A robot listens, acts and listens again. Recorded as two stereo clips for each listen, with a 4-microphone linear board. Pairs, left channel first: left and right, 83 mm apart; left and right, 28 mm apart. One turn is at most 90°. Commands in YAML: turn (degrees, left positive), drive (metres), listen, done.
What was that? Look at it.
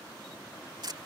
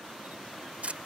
turn: -55
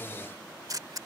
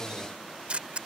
turn: -55
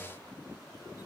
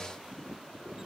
listen: true
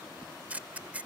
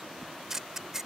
turn: -20
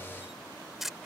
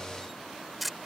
done: "Facing the camera shutter."